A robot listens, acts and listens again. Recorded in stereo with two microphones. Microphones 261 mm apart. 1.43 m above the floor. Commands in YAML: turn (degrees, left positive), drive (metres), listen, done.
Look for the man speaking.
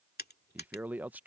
turn: -30
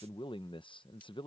turn: 20
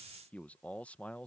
done: "Facing the man speaking."